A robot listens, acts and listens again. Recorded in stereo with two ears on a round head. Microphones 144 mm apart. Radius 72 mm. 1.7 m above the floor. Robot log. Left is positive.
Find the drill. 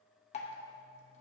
cmd idle
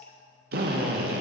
note: The drill: about 65° right or 115° right.
cmd yaw -65
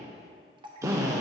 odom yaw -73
note: So it is at 20° right.
cmd yaw -20
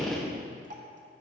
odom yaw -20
end: Facing the drill.